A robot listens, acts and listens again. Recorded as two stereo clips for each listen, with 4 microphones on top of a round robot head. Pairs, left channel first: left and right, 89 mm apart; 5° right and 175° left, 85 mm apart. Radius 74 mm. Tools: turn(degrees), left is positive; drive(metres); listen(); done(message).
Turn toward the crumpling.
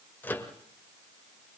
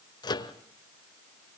listen()
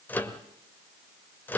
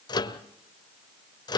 listen()
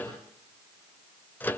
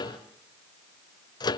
done("I can't make out crumpling, only a microwave.")